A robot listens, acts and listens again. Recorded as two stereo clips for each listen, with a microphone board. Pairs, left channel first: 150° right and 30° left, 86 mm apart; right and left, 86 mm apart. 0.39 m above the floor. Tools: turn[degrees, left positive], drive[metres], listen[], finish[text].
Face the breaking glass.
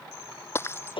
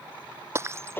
Thought: The breaking glass: 150° left.
Action: turn[150]
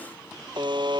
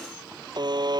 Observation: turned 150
Action: finish[I heard breaking glass from this way, but can't make it out now.]